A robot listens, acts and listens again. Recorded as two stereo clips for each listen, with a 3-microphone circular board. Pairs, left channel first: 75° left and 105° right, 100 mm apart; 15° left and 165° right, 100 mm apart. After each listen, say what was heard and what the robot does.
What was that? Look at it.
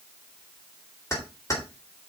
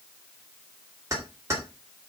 The keys jangling: 135° left. Turn 135° left.
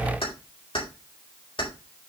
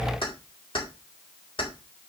The keys jangling is now 45° left. Turn 45° left.
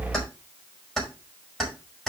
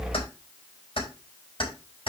The keys jangling is now 10° right. Turn 10° right.
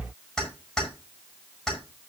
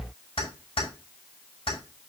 The keys jangling is now 10° right. Turn 10° right.
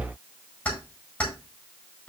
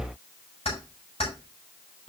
Found it: keys jangling, straight ahead.